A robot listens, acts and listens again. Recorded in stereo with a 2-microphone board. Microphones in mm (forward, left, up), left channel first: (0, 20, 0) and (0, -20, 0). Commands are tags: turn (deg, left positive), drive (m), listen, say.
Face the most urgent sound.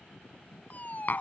<turn deg="45"/>
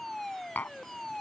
<turn deg="10"/>
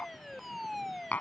<say>Facing the fire alarm.</say>